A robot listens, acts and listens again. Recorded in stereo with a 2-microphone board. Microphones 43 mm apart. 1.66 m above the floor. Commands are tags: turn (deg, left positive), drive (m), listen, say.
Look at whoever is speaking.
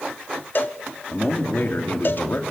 <turn deg="55"/>
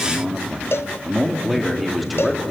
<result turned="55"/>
<say>Found it: a man speaking, straight ahead, 2 to 4 m away.</say>